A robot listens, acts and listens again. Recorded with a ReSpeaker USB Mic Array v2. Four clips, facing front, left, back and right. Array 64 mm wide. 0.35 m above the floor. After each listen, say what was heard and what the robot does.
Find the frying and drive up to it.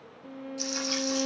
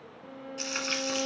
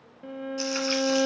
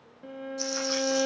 The frying: 120° left. Turn 120° left.
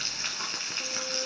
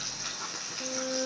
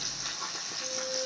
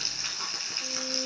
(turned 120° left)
The frying is now 15° right. Turn 15° right.
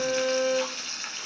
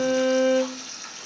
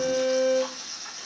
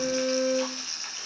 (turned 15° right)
Drive 1.0 m forward.
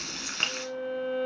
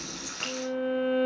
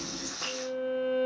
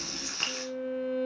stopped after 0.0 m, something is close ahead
Something is in my way. I am facing the frying but have not reached it.